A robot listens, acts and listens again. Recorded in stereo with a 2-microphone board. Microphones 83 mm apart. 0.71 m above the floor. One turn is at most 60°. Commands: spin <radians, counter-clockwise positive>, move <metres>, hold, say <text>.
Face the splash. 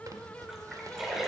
spin -0.52
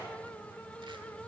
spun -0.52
hold
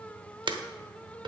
say I heard a splash, but can't make it out now. It was about 25° left or 145° right.